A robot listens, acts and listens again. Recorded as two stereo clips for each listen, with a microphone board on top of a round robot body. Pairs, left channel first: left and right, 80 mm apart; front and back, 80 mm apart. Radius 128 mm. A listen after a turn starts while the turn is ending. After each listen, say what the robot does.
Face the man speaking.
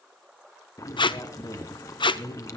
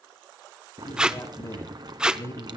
Turn 50° left.
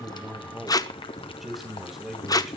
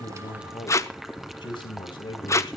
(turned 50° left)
Facing the man speaking, 2 to 4 m away.